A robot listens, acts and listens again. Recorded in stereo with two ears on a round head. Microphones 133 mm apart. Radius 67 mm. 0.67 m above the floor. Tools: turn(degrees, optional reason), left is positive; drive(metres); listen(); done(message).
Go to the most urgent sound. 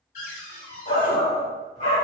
turn(degrees=45, reason="The shout: about 45° left or 135° left.")
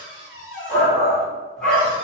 drive(metres=1.0)
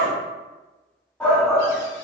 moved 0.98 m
turn(degrees=10, reason="The shout is now 10° left.")
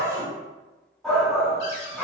drive(metres=1.0)
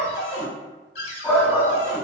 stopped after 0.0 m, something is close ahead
done("I am next to the shout.")